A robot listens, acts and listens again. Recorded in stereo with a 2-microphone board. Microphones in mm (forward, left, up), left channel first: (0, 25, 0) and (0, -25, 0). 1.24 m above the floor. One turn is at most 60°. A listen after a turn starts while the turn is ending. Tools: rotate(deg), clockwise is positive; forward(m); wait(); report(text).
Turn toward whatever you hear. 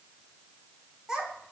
rotate(30)
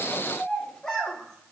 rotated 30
rotate(-10)
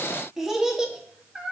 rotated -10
rotate(20)
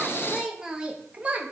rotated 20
rotate(30)
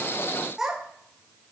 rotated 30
rotate(15)
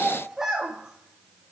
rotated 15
rotate(10)
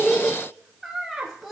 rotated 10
report("Facing the child speaking, 1 to 2 m away.")